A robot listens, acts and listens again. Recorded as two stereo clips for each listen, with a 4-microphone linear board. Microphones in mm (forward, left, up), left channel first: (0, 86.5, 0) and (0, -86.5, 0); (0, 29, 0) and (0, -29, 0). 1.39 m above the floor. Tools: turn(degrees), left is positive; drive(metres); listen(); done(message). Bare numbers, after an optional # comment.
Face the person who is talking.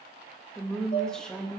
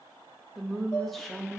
turn(30)
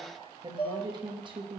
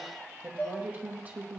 # So it is at 25° right.
turn(-25)
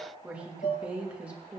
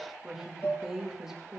done("Found it: a woman speaking, straight ahead, 2 to 4 m away.")